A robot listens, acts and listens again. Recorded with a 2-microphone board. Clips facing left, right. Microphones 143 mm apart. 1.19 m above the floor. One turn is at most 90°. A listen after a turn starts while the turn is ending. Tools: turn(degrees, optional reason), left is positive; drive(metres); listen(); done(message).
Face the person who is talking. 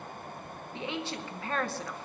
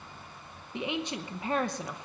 turn(degrees=-15, reason="The woman speaking: about 15° right or 165° right.")
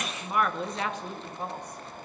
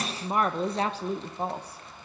turn(degrees=-90, reason="So it is at 150° right.")
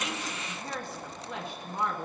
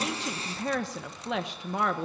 turn(degrees=-80, reason="The woman speaking is now 80° right.")
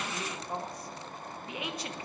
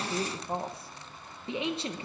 turn(degrees=-25, reason="The woman speaking is now 25° right.")
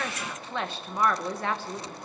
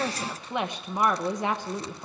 turn(degrees=-15, reason="The woman speaking is now 15° right.")
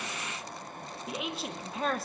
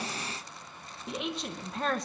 done("Facing the woman speaking.")